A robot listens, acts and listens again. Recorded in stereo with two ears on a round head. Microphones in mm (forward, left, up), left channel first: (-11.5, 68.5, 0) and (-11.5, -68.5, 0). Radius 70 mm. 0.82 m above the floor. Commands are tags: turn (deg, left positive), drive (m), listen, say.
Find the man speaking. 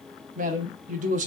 <turn deg="-50"/>
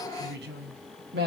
<turn deg="-75"/>
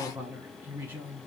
<turn deg="-15"/>
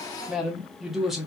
<say>Found it: a man speaking, straight ahead.</say>